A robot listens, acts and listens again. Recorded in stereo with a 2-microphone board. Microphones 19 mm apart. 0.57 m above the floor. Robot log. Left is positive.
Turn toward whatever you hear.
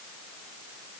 cmd idle
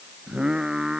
note: The singing: about 40° right or 140° right.
cmd yaw -40
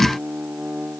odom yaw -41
note: So it is at 105° right.
cmd yaw -105
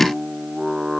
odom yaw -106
end: Found it: singing, straight ahead.